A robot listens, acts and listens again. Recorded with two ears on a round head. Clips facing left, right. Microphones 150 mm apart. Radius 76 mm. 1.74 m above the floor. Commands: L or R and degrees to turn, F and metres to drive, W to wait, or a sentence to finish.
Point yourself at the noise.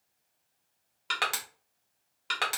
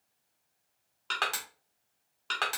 L30
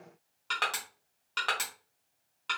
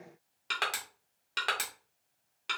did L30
R15
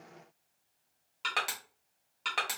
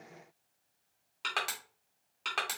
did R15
Found it: crushing, straight ahead.